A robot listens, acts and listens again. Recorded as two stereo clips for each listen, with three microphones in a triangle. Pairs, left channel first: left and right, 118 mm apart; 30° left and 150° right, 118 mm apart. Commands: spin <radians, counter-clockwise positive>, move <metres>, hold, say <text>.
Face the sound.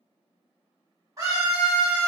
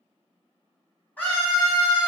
spin -0.70
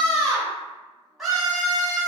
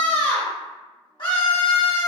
say Facing the scream.